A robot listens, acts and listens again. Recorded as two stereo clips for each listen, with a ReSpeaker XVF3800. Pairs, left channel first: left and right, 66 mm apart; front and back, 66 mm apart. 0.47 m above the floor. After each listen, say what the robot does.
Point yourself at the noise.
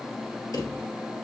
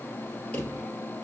Turn 70° left.
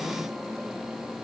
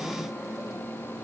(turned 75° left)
Keep listening.
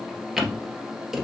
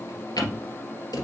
Found it: a drawer, straight ahead, 2 to 4 m away.